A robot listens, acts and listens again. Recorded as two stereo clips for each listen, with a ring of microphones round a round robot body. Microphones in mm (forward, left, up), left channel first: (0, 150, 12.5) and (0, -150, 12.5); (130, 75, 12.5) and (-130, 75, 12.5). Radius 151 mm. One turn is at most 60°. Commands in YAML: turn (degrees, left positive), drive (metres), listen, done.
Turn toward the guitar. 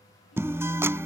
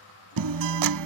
turn: -60
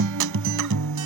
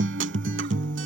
turn: -60
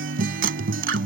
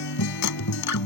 turn: -35
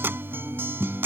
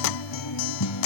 done: "Found it: a guitar, straight ahead."